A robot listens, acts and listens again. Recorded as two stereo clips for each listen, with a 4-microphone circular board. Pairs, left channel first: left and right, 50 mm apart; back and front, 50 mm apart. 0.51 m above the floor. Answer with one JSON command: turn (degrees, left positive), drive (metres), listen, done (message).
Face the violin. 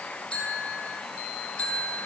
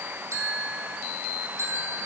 {"listen": true}
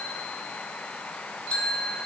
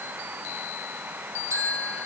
{"listen": true}
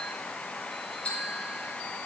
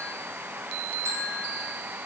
{"done": "I can't make out a violin to turn to."}